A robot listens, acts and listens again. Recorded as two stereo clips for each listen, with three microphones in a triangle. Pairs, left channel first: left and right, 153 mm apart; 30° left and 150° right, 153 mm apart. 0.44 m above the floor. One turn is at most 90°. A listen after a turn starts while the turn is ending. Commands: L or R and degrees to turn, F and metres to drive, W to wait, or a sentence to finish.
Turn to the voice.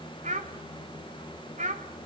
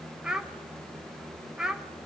R65
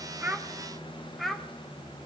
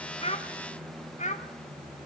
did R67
Found it: a child speaking, straight ahead.